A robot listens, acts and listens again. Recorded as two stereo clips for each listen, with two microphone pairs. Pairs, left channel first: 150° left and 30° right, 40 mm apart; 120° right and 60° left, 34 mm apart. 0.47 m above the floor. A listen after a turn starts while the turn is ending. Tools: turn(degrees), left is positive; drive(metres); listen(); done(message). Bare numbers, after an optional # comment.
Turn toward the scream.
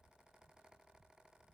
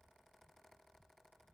listen()
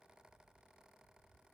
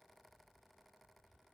listen()
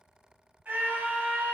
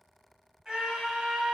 done("Found it: a scream, straight ahead, 1 to 2 m away.")